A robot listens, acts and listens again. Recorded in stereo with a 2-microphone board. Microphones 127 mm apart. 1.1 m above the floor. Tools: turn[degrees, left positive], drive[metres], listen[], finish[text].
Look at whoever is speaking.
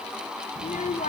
Action: turn[90]
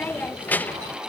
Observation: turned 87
Thought: So it is at 15° left.
Action: turn[15]
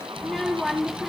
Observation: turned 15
Action: finish[Found it: a child speaking, straight ahead, under 1 m away.]